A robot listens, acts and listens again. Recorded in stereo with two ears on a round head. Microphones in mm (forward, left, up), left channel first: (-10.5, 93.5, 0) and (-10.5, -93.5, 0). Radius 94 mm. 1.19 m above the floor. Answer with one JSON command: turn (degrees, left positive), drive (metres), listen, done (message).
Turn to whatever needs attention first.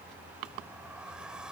{"listen": true}
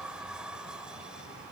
{"listen": true}
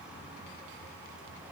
{"done": "I can't make out anything urgent to turn to."}